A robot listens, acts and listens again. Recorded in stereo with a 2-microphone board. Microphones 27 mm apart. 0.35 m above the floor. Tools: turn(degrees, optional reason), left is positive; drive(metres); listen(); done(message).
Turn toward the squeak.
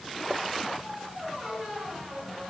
turn(degrees=30)
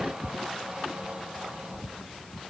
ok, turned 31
turn(degrees=-35, reason="So it is at 35° right.")
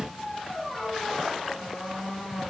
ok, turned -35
done("Found it: a squeak, straight ahead.")